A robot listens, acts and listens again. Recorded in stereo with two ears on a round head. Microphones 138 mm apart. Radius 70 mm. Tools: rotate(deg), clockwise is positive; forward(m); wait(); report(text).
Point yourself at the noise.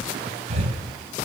rotate(45)
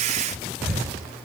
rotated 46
report("Found it: breathing, straight ahead, over 4 m away.")